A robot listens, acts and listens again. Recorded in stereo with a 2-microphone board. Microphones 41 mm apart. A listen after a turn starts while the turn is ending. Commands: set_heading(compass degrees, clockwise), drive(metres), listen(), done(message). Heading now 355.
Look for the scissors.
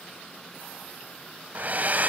listen()
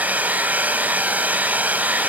listen()
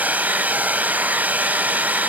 done("I can't make out scissors, only a hair dryer.")